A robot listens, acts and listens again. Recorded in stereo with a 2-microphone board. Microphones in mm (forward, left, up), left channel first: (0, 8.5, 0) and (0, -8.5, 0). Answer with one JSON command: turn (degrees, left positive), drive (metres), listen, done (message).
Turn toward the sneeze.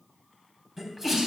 {"turn": -20}
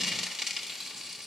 {"listen": true}
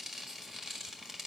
{"done": "I heard a sneeze, but can't make it out now. It was about straight ahead or 140° right."}